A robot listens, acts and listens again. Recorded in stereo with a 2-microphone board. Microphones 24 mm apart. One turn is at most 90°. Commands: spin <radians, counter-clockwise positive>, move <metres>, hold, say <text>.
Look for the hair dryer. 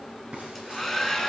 spin 0.52
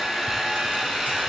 spin -0.26
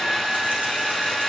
say Facing the hair dryer.